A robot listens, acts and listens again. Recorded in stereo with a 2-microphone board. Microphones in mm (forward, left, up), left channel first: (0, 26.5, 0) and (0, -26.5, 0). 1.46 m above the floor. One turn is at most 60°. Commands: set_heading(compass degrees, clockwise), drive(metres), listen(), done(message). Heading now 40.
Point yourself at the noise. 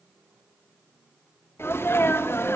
set_heading(350)
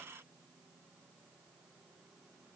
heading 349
listen()
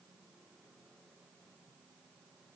done("I heard a sneeze, but can't make it out now. It was about straight ahead or 75° left.")